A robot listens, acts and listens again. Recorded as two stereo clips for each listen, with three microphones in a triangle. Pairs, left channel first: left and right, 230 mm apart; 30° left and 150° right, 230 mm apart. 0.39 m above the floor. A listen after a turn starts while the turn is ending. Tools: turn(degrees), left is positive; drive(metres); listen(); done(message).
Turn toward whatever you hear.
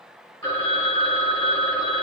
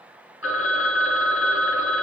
turn(degrees=25)
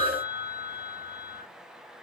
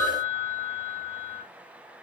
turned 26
done("Facing the phone ringing.")